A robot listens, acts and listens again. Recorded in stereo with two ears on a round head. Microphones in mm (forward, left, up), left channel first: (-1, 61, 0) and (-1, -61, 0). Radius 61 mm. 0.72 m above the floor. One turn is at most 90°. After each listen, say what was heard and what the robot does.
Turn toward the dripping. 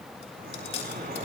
Turn 90° right.
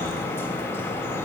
So it is at 20° left. Turn 20° left.
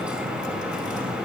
Facing the dripping.